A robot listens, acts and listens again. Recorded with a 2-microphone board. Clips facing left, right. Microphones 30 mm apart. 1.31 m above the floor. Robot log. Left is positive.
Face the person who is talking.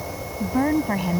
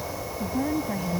note: The woman speaking: about 60° left or 120° left.
cmd yaw +60
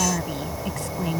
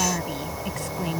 end: Facing the woman speaking.